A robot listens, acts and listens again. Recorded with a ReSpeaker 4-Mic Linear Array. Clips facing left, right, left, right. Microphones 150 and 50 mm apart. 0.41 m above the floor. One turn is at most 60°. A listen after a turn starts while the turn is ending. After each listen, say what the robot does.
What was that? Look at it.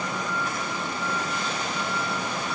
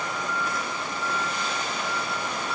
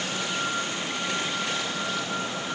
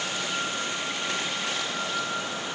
Keep listening.
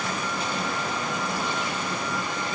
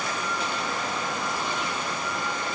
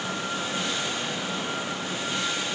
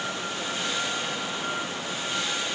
Keep listening.
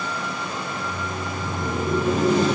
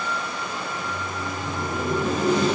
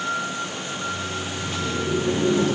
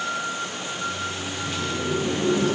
Turn 25° right.
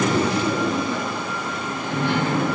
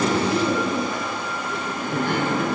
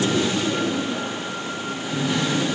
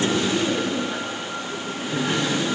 Turn 60° right.
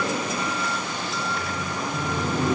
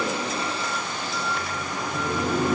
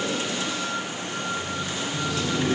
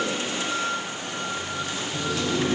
Turn 55° right.
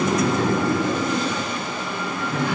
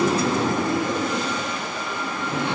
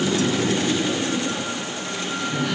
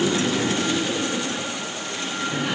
Turn 25° right.
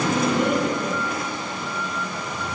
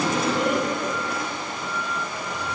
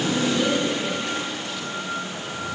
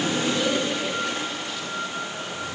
Found it: laughter, straight ahead.